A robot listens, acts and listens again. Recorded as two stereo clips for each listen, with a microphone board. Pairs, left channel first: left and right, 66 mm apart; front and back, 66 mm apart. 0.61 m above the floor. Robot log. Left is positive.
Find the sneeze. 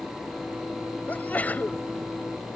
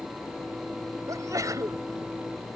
note: The sneeze: 155° left.
cmd yaw +155
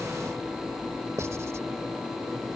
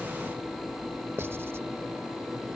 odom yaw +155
end: I heard a sneeze from this way, but can't make it out now.